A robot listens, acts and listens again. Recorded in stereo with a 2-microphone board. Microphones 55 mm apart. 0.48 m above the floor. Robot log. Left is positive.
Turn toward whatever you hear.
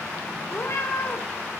note: The cat meowing: about 55° left or 125° left.
cmd yaw +55
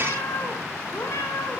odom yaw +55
note: So it is at 60° left.
cmd yaw +60
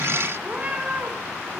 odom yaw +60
note: The cat meowing is now 25° right.
cmd yaw -25
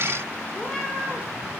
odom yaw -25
note: The cat meowing is now 15° left.
cmd yaw +15
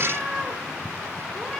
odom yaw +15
end: Facing the cat meowing.